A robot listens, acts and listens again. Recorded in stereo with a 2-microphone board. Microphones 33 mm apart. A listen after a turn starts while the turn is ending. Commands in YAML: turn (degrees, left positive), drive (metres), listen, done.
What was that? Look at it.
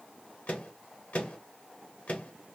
turn: 50
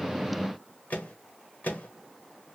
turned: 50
turn: 70
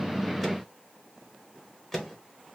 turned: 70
turn: 10
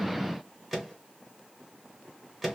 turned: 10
done: "Facing the microwave, 1 to 2 m away."